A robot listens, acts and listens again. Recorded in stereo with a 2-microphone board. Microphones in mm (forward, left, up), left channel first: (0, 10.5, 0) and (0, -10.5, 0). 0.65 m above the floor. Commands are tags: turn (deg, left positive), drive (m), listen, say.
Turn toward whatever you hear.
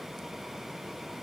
<listen/>
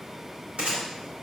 <turn deg="-75"/>
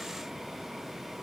<listen/>
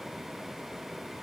<say>I heard a gunshot, but can't make it out now. It was about straight ahead or 30° right.</say>